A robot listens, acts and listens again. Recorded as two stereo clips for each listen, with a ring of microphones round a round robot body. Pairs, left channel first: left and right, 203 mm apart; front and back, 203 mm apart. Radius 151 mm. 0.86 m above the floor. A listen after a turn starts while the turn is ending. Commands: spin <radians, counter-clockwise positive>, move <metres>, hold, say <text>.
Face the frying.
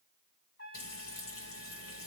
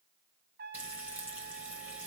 spin 1.75
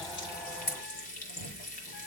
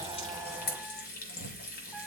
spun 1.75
spin 0.70
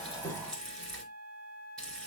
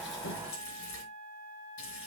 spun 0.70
say Found it: frying, straight ahead.